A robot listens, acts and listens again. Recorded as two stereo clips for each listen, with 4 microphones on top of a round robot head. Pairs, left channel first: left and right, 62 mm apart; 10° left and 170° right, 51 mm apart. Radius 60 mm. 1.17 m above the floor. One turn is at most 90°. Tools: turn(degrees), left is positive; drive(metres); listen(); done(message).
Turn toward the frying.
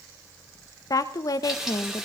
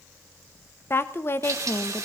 turn(degrees=-90)
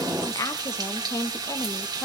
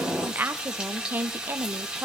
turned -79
turn(degrees=-90)
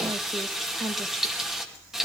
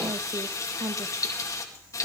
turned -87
turn(degrees=-10)
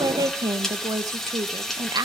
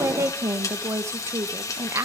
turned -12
done("Facing the frying, 2 to 4 m away.")